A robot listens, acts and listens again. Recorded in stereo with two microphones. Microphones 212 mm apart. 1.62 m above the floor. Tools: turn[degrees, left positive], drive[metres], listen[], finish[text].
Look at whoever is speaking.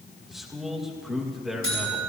Action: turn[30]
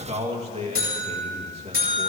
Thought: So it is at 30° right.
Action: turn[-30]
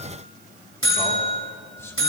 Thought: The man speaking is now 10° left.
Action: turn[10]
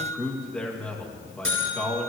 Action: finish[Found it: a man speaking, straight ahead.]